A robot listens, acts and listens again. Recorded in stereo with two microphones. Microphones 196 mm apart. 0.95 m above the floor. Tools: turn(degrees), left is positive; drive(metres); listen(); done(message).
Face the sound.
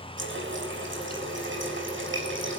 turn(degrees=-90)
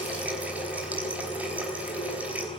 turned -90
done("Found it: a running tap, straight ahead.")